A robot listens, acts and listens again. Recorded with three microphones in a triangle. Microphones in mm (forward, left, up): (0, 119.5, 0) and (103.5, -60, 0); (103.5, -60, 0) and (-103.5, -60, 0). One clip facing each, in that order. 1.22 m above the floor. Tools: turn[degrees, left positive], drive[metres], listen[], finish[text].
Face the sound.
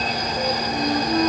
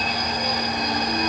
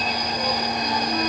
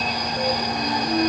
Thought: The flute: 125° left.
Action: turn[125]
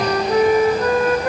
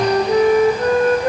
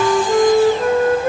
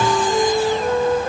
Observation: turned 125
Action: finish[Found it: a flute, straight ahead, 1 to 2 m away.]